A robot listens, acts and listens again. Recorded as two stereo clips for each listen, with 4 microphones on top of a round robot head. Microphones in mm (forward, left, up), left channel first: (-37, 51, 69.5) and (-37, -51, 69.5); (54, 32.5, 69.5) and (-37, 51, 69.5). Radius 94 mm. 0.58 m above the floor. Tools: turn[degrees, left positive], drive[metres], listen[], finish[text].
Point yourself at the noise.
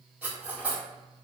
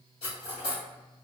Thought: The cutlery clinking: 10° right.
Action: turn[-10]
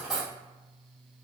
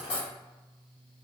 Action: finish[Found it: cutlery clinking, straight ahead, 2 to 4 m away.]